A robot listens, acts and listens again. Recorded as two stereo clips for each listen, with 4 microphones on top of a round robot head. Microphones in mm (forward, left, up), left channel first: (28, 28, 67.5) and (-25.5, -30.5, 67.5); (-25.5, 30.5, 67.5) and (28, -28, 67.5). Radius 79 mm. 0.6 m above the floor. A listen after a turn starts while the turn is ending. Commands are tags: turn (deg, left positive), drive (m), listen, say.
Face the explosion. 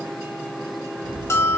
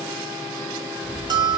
<turn deg="-130"/>
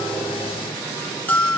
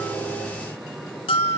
<say>Facing where the explosion came from. I can't hear it now.</say>